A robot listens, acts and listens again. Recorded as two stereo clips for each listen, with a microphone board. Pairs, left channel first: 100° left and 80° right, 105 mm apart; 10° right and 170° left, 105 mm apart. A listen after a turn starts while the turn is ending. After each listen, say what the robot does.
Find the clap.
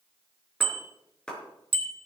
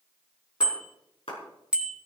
Turn 20° left.
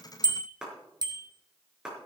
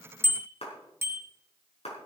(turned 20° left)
Facing the clap.